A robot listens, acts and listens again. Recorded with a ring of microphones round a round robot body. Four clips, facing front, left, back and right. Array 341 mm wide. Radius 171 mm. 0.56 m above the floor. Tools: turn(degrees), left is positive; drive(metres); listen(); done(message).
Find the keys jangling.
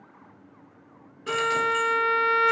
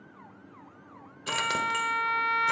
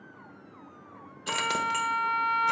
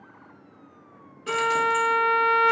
turn(degrees=125)
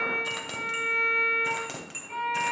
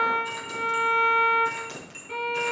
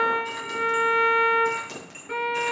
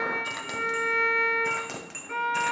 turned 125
turn(degrees=-65)
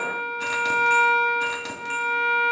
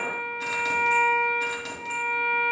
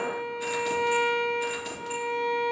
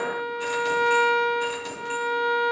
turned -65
done("Found it: keys jangling, straight ahead, 2 to 4 m away.")